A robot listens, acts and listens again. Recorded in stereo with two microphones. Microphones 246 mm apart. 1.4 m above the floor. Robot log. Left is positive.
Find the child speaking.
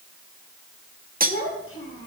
note: The child speaking: about 60° left or 120° left.
cmd yaw +60
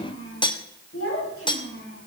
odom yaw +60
note: So it is at 60° left.
cmd yaw +60
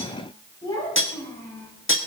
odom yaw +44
note: The child speaking is now 15° left.
cmd yaw +15
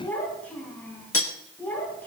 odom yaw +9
end: Facing the child speaking, over 4 m away.